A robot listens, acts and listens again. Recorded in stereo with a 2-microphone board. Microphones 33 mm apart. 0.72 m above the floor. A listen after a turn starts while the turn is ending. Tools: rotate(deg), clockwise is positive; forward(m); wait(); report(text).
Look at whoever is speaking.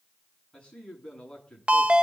rotate(-20)
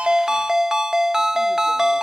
wait()
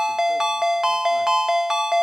wait()
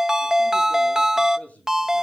rotate(-135)
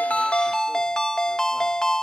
wait()
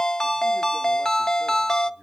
rotate(40)
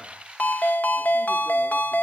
wait()
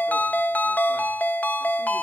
wait()
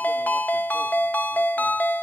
report("I heard a man speaking from this way, but can't make it out now.")